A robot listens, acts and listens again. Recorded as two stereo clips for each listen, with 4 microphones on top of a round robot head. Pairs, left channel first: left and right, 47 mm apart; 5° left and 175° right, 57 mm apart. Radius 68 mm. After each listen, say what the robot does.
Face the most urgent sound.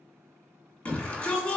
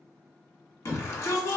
Turn 30° left.
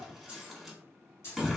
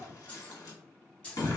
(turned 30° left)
Facing the shout, 1 to 2 m away.